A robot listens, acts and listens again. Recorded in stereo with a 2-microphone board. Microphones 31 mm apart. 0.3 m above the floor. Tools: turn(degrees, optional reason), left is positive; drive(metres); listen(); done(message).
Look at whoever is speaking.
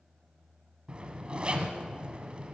listen()
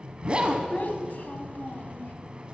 turn(degrees=65, reason="The child speaking: about 65° left or 115° left.")
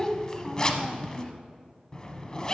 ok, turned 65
turn(degrees=25, reason="So it is at 25° left.")
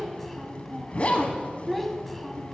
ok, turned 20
done("Found it: a child speaking, straight ahead.")